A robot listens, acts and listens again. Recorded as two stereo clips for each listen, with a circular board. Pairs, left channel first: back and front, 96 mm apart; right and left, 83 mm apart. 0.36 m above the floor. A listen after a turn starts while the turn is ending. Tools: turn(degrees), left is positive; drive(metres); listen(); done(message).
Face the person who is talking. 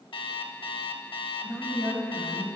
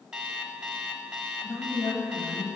turn(degrees=-75)
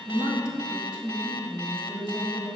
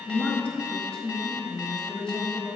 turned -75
turn(degrees=-10)
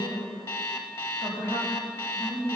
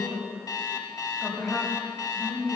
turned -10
done("Facing the woman speaking, 1 to 2 m away.")